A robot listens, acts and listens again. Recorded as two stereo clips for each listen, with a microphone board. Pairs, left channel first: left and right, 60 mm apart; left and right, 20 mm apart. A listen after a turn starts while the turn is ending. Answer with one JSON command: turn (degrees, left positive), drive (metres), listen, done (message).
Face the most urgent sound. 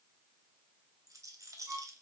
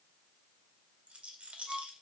{"listen": true}
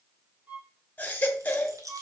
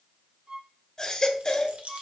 {"turn": 30}
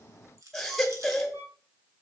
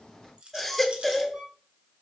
{"done": "Found it: a baby crying, straight ahead."}